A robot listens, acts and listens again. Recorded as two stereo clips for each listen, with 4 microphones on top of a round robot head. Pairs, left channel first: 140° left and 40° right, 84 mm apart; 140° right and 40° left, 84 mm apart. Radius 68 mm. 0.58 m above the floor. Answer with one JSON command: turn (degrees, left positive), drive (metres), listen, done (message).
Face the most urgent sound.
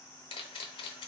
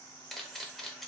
{"listen": true}
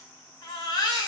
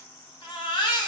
{"turn": 180}
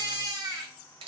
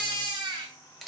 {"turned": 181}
{"done": "Facing the baby crying."}